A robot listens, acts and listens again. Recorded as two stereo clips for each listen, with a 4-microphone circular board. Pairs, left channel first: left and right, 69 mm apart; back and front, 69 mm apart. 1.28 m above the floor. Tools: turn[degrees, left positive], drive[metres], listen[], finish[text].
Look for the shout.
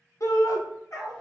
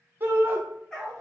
Thought: The shout: 55° left.
Action: turn[55]
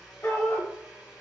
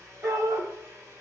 Thought: The shout is now 30° left.
Action: turn[30]
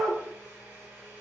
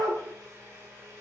Thought: The shout is now 10° left.
Action: turn[10]
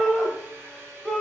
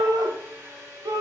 Action: finish[Facing the shout, 1 to 2 m away.]